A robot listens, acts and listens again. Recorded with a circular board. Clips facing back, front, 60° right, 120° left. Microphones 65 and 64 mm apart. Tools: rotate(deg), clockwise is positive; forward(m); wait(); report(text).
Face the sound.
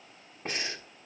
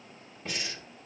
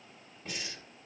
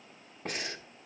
rotate(-135)
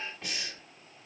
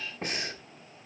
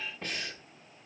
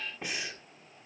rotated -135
rotate(-45)
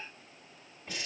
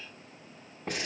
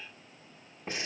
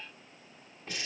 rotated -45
report("Found it: breathing, straight ahead, 1 to 2 m away.")